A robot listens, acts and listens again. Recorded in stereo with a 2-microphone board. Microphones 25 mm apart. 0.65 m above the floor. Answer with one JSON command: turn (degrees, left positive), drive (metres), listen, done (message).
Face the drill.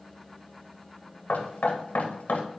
{"listen": true}
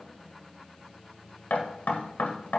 {"listen": true}
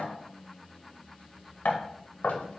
{"done": "I can't make out a drill to turn to."}